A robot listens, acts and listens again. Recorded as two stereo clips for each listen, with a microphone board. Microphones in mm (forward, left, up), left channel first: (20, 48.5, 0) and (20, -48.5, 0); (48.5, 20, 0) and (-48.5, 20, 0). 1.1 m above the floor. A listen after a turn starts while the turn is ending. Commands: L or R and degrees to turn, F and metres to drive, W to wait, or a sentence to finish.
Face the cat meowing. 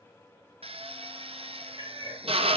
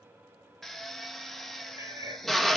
R125
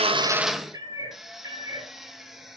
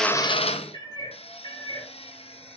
R40
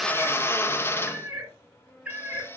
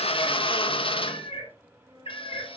R10
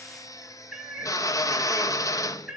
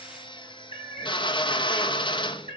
Found it: a cat meowing, straight ahead.